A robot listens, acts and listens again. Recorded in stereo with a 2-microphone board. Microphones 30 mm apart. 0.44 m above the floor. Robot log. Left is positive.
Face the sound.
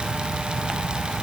cmd idle
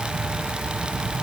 cmd idle
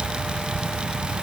end: I can't make out anything to turn to.